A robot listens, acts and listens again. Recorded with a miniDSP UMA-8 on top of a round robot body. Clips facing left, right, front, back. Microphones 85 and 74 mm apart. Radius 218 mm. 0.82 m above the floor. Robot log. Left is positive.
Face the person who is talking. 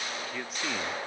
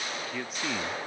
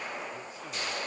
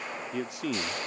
note: The man speaking: straight behind.
cmd yaw +180
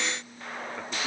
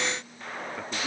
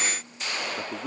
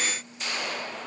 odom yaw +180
cmd idle
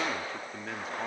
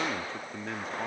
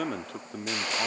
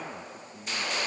end: Found it: a man speaking, straight ahead.